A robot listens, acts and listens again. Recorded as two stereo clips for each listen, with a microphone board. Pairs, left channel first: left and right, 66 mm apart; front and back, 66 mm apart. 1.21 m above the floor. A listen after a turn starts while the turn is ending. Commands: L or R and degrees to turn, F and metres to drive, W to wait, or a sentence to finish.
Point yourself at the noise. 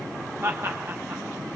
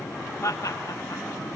R40
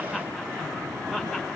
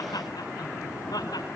Facing the laughter.